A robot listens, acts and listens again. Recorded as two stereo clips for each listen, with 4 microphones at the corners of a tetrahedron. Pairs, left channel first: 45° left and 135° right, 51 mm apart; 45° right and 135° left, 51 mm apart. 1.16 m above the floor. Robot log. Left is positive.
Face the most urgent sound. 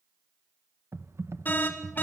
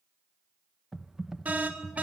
note: The alarm: 85° left.
cmd yaw +85
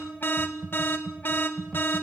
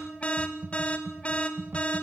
note: The alarm is now 15° left.
cmd yaw +15
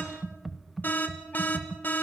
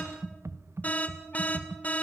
end: Facing the alarm.